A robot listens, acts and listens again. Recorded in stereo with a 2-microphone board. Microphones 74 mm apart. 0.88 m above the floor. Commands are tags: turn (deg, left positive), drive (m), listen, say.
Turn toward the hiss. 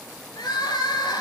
<listen/>
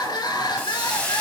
<turn deg="20"/>
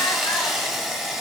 <say>Facing the hiss.</say>